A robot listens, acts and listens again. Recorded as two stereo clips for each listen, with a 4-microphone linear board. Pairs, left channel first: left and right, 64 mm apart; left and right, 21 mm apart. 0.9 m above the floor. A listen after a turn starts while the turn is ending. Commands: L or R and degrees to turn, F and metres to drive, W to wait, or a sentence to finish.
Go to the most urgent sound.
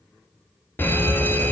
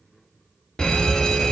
L35
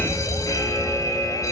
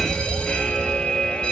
L110
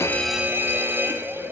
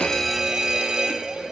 R35
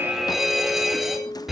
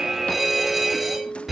F1.0
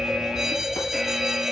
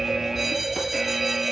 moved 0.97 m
R10
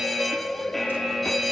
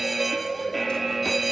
F1.0
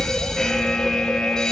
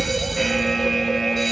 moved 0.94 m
L10
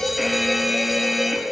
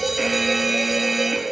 F1.0
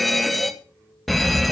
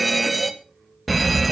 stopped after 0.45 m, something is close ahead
Arrived at the fire alarm, straight ahead.